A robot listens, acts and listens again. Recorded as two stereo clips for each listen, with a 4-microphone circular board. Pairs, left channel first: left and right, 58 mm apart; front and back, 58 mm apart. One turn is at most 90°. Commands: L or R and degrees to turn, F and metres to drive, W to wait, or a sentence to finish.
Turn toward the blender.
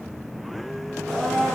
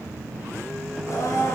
L10
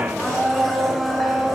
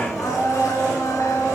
Found it: a blender, straight ahead, 2 to 4 m away.